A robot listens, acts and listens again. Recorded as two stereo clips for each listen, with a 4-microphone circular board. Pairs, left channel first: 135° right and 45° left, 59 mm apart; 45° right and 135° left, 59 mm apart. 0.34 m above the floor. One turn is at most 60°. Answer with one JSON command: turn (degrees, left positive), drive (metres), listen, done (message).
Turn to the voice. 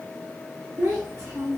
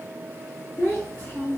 {"turn": -10}
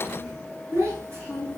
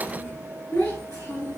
{"done": "Facing the child speaking."}